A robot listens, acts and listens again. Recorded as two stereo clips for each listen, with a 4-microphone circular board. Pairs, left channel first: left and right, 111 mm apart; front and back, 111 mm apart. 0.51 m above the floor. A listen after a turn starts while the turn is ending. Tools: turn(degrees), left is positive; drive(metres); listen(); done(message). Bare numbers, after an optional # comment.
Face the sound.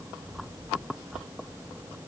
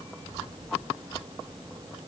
listen()
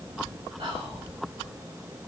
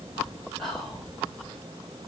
# The whispering: 85° right.
turn(-85)
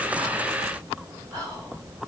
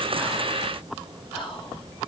# The whispering is now 35° right.
turn(-35)
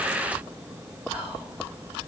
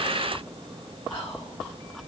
# The whispering is now 15° right.
turn(-15)
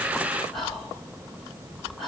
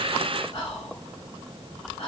done("Found it: whispering, straight ahead.")